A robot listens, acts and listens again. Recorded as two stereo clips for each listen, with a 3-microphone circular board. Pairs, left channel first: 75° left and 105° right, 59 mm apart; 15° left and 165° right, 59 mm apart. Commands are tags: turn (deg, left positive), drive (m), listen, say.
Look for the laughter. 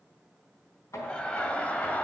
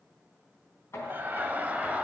<turn deg="130"/>
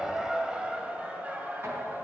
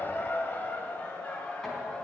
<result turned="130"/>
<turn deg="-50"/>
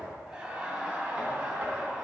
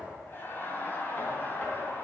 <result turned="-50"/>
<turn deg="-35"/>
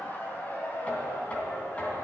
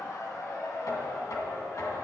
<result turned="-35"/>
<turn deg="15"/>
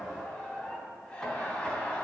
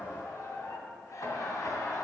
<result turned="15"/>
<say>Facing the laughter.</say>